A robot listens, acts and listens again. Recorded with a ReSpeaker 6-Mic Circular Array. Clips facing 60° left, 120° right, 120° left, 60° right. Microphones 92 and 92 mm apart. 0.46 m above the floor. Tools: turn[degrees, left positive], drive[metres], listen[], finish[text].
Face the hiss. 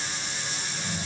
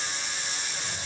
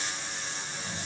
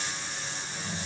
Action: listen[]
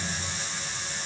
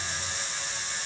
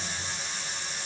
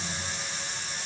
Action: listen[]
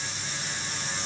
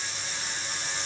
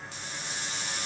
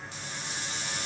Action: finish[I can't make out a hiss to turn to.]